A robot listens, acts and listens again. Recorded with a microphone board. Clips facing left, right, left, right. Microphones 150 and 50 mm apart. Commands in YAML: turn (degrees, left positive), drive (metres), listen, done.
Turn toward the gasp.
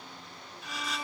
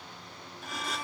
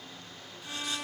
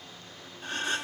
turn: -50
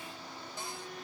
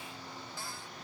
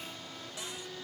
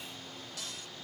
listen: true
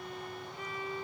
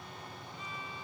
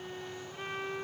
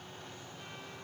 done: "I heard a gasp, but can't make it out now. It was about straight ahead or 80° right."